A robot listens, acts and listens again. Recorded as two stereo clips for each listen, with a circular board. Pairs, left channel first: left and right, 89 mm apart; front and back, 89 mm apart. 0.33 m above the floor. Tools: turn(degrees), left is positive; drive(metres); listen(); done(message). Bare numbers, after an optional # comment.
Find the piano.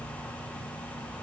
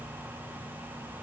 listen()
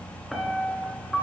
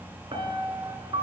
# The piano: straight behind.
turn(180)
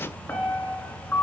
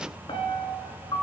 # The piano is now 20° left.
turn(20)
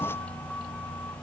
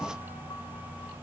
listen()
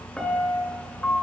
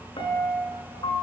done("Facing the piano, 1 to 2 m away.")